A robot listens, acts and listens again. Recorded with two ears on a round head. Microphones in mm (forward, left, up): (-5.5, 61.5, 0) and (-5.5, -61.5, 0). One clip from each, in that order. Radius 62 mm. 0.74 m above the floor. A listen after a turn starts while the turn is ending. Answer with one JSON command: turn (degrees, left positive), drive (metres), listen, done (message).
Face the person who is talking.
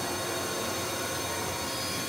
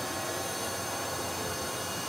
{"listen": true}
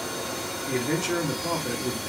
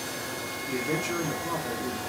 {"turn": 55}
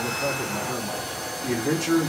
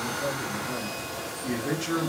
{"turn": 15}
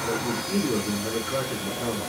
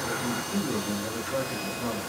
{"done": "Facing the man speaking, 1 to 2 m away."}